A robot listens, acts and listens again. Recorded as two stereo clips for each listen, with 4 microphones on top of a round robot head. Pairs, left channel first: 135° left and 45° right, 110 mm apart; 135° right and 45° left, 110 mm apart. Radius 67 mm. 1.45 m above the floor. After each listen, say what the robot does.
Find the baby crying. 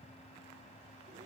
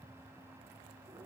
Keep listening.
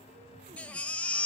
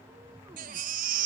Turn 60° left.
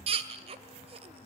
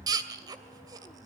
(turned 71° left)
Turn 10° right.
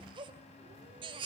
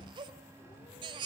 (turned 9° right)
Found it: a baby crying, straight ahead.